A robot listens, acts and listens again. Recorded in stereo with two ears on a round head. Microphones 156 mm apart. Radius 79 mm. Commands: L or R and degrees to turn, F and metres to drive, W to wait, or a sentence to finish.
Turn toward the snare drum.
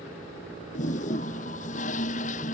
W
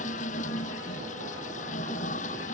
W
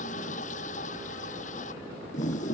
I can't make out a snare drum, only a toilet flushing.